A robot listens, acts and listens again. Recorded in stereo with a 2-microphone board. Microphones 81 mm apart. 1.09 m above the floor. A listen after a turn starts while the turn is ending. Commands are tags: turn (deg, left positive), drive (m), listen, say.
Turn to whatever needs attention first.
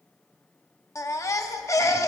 <turn deg="40"/>
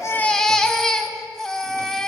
<turn deg="10"/>
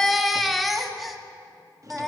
<say>Facing the baby crying, under 1 m away.</say>